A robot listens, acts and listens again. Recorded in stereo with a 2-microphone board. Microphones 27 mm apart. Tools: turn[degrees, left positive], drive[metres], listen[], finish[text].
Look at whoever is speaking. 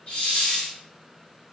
Action: listen[]
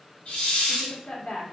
Thought: The woman speaking: about 50° left or 130° left.
Action: turn[50]
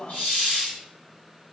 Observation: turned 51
Action: finish[Found it: a woman speaking, straight ahead.]